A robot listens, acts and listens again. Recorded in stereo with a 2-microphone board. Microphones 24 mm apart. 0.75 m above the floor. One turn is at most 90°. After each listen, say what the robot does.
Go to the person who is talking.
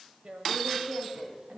Turn 90° right.
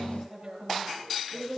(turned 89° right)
Drive 1.0 m forward.
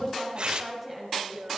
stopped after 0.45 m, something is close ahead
Blocked. The woman speaking is further on, straight ahead.